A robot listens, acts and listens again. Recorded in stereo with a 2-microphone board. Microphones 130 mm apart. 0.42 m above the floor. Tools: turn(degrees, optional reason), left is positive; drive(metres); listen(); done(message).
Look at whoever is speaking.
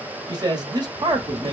turn(degrees=-35, reason="The man speaking: about 35° right or 145° right.")
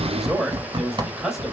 done("Facing the man speaking, 1 to 2 m away.")